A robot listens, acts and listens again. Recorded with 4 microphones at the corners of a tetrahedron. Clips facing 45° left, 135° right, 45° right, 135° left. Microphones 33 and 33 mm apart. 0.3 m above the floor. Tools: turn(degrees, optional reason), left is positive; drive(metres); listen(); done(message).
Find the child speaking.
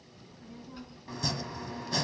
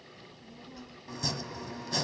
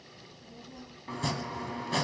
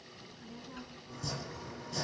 turn(degrees=105, reason="The child speaking: 105° left.")
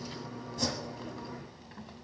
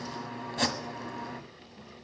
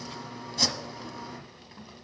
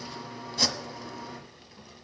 turn(degrees=20, reason="The child speaking is now 20° left.")
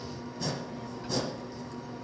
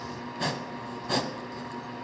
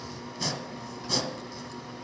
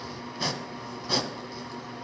listen()
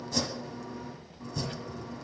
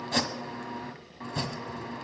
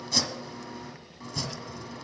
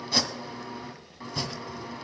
turn(degrees=40, reason="The child speaking is now 40° left.")
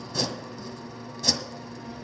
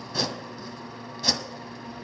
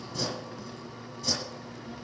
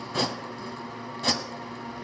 listen()
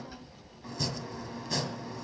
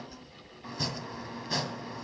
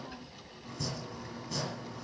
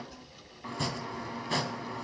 done("Facing the child speaking, 1 to 2 m away.")